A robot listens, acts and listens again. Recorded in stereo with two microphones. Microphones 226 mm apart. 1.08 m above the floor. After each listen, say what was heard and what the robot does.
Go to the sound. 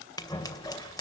The scissors: about 15° left or 165° left. Turn 15° left.
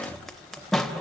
Drive 1.0 m forward.
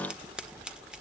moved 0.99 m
Drive 1.0 m forward.
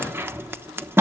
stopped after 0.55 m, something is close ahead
The scissors is now 10° right. Turn 10° right.
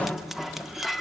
Arrived at the scissors, straight ahead.